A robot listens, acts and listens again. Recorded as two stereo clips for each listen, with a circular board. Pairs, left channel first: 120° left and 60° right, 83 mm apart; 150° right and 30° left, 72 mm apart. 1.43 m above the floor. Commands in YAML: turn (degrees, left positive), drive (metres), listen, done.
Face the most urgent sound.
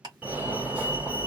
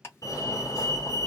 turn: -130
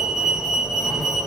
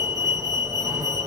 turn: 25
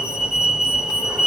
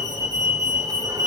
turn: 20
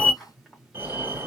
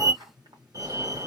done: "Facing the fire alarm, 1 to 2 m away."